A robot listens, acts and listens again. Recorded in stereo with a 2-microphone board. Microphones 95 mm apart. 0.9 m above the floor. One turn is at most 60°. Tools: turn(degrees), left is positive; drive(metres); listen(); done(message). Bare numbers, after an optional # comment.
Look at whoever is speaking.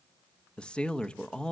turn(30)
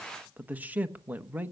# So it is at 20° right.
turn(-20)
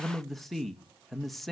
done("Facing the man speaking, under 1 m away.")